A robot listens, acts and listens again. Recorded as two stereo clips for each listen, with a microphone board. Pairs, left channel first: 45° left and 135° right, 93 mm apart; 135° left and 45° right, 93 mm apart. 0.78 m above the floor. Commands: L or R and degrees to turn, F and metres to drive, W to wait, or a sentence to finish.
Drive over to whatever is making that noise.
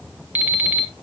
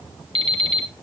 R65
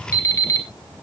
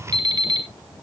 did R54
R10
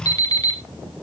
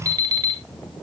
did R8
F1.0
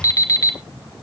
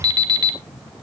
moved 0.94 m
F1.0
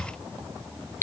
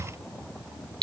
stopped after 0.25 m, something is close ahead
R15
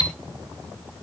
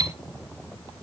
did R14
I am next to the alarm clock.